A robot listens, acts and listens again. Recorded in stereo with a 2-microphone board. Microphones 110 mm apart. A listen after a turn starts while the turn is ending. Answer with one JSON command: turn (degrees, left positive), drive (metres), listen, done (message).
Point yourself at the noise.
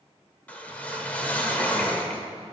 {"turn": 30}
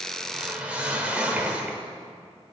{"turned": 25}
{"turn": -15}
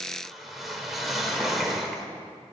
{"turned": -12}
{"done": "Facing the whoosh, 1 to 2 m away."}